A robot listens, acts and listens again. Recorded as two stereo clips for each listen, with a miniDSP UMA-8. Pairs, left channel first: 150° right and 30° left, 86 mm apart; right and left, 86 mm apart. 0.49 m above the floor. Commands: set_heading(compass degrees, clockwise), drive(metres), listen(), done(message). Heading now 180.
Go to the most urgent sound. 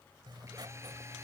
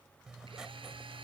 listen()
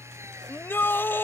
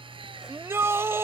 set_heading(35)
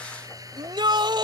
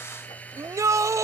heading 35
set_heading(350)
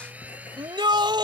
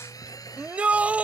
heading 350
set_heading(335)
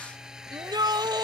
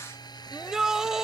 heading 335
drive(1.0)
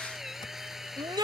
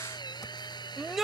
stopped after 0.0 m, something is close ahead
done("Something is in my way. I am facing the shout but have not reached it.")